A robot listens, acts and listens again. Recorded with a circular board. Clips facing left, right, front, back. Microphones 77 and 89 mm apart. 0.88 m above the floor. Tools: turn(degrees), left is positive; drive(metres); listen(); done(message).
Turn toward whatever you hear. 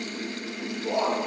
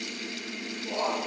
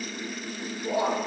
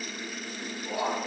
turn(degrees=60)
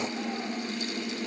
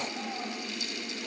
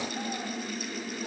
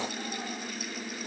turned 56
listen()
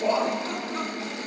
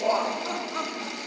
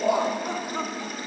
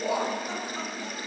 turn(degrees=-20)
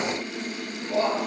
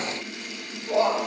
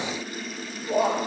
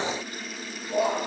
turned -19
turn(degrees=-30)
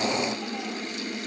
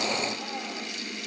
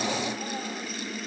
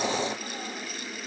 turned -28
listen()
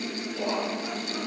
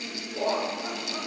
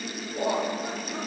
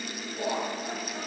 turn(degrees=-30)
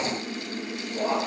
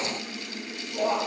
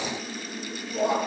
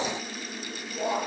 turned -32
done("Found it: laughter, straight ahead, 1 to 2 m away.")